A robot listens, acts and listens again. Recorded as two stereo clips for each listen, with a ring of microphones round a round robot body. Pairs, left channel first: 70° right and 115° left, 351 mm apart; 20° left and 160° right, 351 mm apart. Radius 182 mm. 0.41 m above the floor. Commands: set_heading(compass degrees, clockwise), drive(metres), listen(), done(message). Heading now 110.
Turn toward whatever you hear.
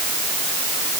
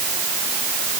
listen()
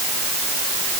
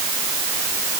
listen()
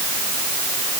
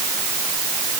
done("I can't make out anything.")